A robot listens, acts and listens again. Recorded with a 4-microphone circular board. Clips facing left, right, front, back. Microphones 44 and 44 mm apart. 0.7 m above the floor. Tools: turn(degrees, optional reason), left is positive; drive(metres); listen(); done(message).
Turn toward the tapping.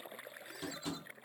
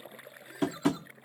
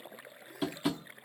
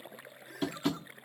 turn(degrees=-85, reason="The tapping: 85° right.")
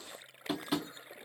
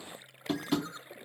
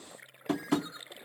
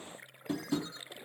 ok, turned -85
done("Facing the tapping.")